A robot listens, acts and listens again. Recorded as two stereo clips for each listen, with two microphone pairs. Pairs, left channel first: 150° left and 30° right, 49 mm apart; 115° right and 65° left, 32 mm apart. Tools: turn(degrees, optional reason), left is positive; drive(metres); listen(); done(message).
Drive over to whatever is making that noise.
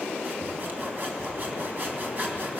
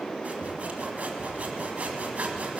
turn(degrees=20, reason="The sawing: 20° left.")
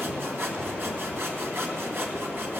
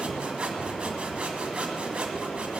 drive(metres=1.0)
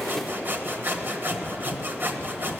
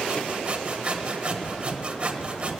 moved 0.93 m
turn(degrees=10, reason="The sawing is now 10° left.")
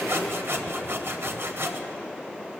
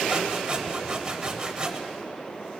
drive(metres=1.0)
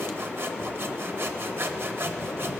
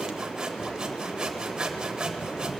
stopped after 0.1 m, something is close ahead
done("I am next to the sawing.")